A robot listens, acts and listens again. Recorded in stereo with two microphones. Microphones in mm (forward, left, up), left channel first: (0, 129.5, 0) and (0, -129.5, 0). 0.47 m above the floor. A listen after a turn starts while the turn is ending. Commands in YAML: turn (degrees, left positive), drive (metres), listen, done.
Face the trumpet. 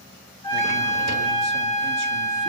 turn: 30
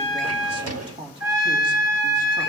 turn: -15
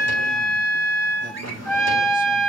done: "Found it: a trumpet, straight ahead, over 4 m away."